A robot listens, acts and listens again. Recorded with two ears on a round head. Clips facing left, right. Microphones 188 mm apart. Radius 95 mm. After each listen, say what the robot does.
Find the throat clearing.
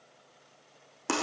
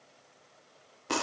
Keep listening.
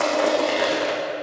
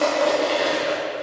Keep listening.
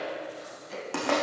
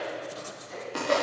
Turn 45° left.
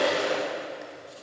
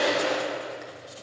Keep listening.
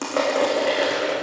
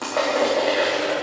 Keep listening.
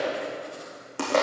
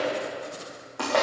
I heard throat clearing, but can't make it out now. It was about straight ahead or 90° left.